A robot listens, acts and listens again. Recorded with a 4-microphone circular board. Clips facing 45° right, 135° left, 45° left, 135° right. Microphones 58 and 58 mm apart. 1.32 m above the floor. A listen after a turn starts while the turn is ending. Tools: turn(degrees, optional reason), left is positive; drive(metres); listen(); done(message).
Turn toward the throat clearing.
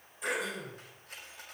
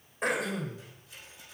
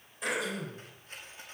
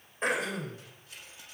turn(degrees=175, reason="The throat clearing: 175° left.")
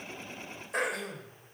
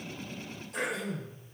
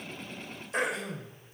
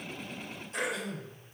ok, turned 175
done("Facing the throat clearing, 2 to 4 m away.")